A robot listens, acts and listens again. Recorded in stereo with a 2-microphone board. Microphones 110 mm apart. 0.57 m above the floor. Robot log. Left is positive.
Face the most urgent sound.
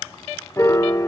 cmd idle
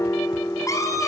note: The scream: about 30° left or 150° left.
cmd yaw +30
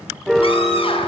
note: So it is at 120° left.
cmd yaw +120
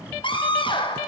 note: The scream is now 50° left.
cmd yaw +50
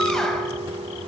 cmd idle
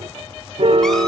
cmd idle
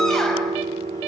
end: Facing where the scream came from. I can't hear it now.